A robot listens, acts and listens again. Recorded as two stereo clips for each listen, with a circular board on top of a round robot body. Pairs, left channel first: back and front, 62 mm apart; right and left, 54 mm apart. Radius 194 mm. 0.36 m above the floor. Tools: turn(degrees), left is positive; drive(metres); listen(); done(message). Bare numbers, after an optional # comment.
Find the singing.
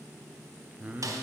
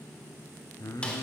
# The singing: 70° right.
turn(-70)
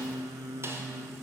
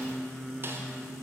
done("Found it: singing, straight ahead.")